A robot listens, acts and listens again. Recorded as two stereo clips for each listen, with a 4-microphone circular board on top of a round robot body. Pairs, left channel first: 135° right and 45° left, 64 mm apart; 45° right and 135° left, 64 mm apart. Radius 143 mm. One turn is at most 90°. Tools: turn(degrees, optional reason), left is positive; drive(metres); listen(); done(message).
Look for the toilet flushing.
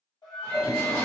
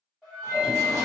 turn(degrees=90, reason="The toilet flushing: 175° left.")
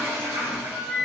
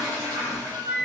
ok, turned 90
turn(degrees=90, reason="The toilet flushing is now 115° left.")
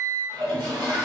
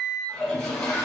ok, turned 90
turn(degrees=40, reason="The toilet flushing is now 40° left.")
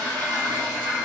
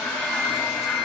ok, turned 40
turn(degrees=35, reason="The toilet flushing is now 35° left.")
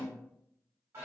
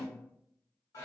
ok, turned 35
done("Facing the toilet flushing, under 1 m away.")